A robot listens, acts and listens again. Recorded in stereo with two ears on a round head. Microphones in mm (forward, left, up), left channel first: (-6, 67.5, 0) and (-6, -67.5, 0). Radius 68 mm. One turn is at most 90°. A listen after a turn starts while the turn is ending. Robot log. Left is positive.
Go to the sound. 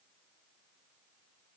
cmd idle
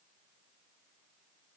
cmd idle
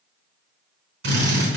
cmd yaw -90
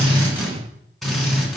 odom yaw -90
cmd fwd 1.0
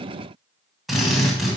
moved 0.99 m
cmd fwd 1.0
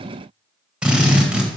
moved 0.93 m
cmd fwd 1.0
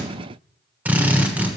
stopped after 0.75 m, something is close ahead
note: The drill is now 10° right.
cmd yaw -10
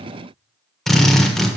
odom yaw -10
end: I am next to the drill.